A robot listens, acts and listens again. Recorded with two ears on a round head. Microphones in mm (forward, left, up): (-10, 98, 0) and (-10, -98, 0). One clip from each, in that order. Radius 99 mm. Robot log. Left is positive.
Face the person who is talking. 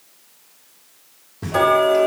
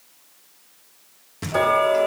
cmd idle
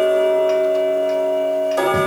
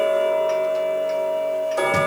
cmd idle
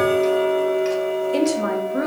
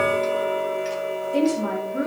note: The woman speaking: about 60° left or 120° left.
cmd yaw +60
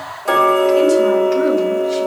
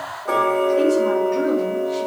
cmd idle
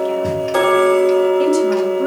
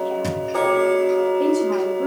cmd idle
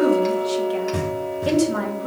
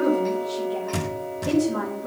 note: So it is at 55° left.
cmd yaw +55
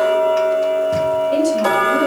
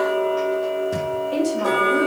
cmd idle
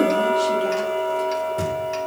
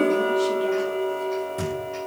cmd idle
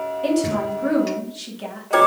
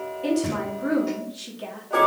end: Found it: a woman speaking, straight ahead, 2 to 4 m away.